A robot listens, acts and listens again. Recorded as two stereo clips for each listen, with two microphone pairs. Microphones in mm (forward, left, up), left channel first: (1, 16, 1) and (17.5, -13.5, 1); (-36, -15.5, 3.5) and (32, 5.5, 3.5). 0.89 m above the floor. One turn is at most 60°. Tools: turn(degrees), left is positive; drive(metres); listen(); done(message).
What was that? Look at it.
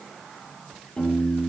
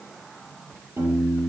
turn(degrees=60)
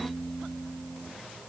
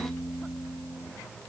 done("Found it: a piano, straight ahead.")